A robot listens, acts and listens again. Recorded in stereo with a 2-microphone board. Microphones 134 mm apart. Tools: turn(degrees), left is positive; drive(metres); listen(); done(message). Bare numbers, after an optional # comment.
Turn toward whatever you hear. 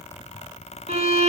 # The violin: about 50° right or 130° right.
turn(-50)
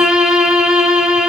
done("Found it: a violin, straight ahead.")